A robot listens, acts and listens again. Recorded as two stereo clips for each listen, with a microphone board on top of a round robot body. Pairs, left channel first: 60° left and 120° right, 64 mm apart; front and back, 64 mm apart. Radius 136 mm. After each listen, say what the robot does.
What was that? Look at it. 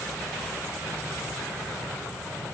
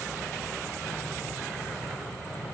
Keep listening.
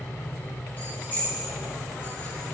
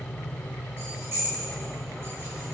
Turn 125° left.
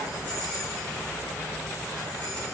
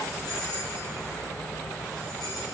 Keep listening.
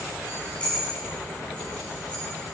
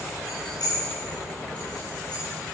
Turn 10° right.
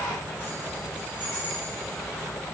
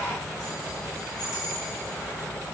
Found it: keys jangling, straight ahead, over 4 m away.